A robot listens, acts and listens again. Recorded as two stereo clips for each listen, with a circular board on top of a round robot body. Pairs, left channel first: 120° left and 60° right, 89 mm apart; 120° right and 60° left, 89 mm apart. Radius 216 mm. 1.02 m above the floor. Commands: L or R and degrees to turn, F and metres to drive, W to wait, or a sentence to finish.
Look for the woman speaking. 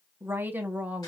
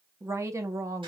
L15
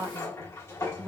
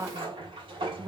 L20
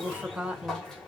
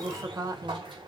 L15
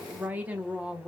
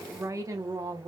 L20
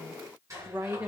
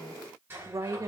L10
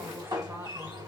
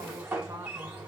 W
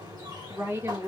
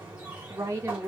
Found it: a woman speaking, straight ahead.